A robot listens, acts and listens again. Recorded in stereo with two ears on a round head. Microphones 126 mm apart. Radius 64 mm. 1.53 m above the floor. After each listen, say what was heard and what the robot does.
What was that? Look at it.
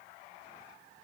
Keep listening.
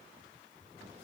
Keep listening.
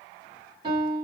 The piano: about 35° right or 145° right. Turn 35° right.
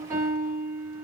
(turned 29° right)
So it is at 15° right. Turn 15° right.
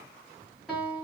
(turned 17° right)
Facing the piano, 1 to 2 m away.